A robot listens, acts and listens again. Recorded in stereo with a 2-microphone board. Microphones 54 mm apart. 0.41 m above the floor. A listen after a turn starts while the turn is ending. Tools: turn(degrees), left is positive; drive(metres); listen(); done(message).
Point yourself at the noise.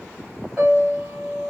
turn(degrees=-15)
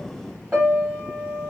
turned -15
turn(degrees=-150)
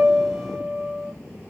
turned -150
turn(degrees=-40)
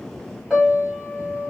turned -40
turn(degrees=-15)
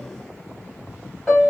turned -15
done("Facing the piano.")